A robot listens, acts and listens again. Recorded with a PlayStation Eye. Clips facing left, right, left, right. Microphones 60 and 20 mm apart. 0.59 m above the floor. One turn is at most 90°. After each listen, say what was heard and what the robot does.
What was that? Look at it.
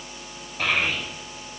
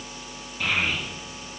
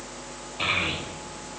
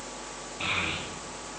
The child speaking: about 65° left or 115° left. Turn 65° left.
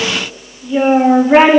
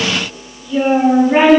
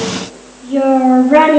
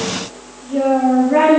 So it is at 35° left. Turn 35° left.
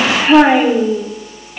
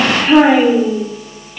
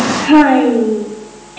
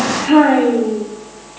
The child speaking is now 15° left. Turn 15° left.
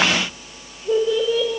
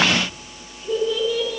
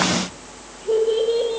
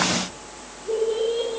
The child speaking is now 30° left. Turn 30° left.
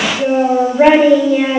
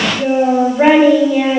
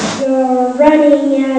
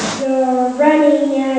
Facing the child speaking, 1 to 2 m away.